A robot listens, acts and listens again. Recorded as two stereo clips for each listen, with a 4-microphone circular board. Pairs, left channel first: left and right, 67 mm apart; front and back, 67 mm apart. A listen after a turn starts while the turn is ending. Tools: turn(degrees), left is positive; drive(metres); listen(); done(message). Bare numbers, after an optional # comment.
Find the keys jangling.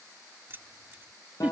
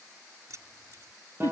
# The keys jangling: 145° right.
turn(-145)
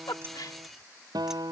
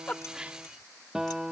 listen()
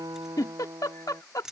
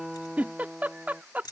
# The keys jangling is now 10° right.
turn(-10)
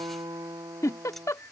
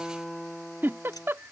listen()
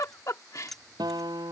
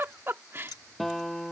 done("Facing the keys jangling.")